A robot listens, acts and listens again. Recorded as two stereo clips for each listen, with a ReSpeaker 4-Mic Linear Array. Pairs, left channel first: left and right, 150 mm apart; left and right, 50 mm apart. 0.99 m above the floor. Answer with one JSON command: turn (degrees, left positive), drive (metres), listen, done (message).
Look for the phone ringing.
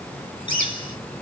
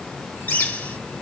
{"listen": true}
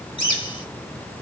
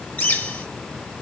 {"listen": true}
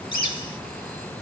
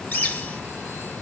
{"done": "I can't make out a phone ringing, only a bird."}